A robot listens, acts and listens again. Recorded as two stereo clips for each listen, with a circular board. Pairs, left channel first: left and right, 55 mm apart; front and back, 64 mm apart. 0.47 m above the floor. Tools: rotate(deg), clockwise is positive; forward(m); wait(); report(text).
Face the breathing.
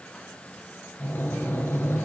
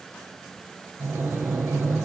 rotate(-130)
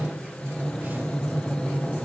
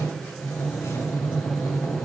rotate(-15)
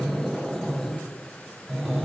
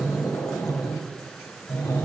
report("Found it: breathing, straight ahead, 2 to 4 m away.")